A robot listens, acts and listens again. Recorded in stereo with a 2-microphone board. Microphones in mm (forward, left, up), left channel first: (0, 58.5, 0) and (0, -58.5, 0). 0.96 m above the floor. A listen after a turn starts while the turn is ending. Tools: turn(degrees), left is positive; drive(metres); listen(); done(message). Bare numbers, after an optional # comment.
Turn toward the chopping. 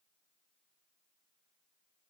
listen()
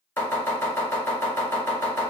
# The chopping: about 15° left or 165° left.
turn(15)
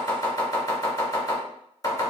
# So it is at 150° left.
turn(150)
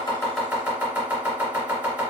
# The chopping is now 10° right.
turn(-10)
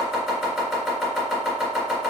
done("Found it: chopping, straight ahead.")